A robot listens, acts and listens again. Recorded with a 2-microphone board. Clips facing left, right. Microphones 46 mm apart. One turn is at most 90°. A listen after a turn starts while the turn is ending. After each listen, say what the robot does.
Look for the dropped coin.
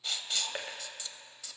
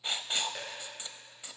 Turn 40° left.
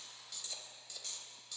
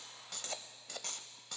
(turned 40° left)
Keep listening.
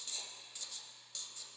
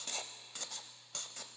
I heard a dropped coin, but can't make it out now. It was about straight ahead or 100° left.